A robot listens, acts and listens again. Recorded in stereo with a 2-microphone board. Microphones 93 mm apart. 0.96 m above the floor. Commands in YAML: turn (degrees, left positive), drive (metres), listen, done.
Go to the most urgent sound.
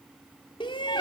turn: 65
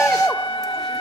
drive: 1.0
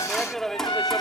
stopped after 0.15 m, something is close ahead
done: "Something is in my way. I am facing the shout but have not reached it."